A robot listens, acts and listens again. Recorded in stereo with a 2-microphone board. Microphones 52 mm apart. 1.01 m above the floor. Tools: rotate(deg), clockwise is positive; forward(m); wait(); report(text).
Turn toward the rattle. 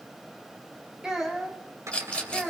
rotate(-25)
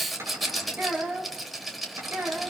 report("Found it: a rattle, straight ahead, 2 to 4 m away.")